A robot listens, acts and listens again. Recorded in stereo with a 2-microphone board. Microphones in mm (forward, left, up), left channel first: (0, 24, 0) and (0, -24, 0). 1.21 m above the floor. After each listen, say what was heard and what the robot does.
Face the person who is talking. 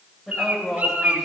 Turn 30° right.
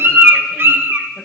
Keep listening.
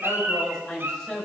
So it is at 10° left. Turn 10° left.
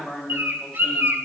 Facing the woman speaking, over 4 m away.